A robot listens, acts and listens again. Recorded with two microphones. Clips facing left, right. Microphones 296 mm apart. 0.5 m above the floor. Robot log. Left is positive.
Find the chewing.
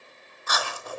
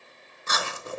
note: The chewing: about 25° right or 155° right.
cmd yaw -25
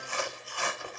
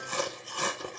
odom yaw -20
note: So it is at 135° right.
cmd yaw -135
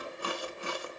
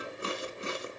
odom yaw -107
note: The chewing is now 25° right.
cmd yaw -25
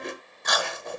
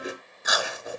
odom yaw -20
end: Found it: chewing, straight ahead, 1 to 2 m away.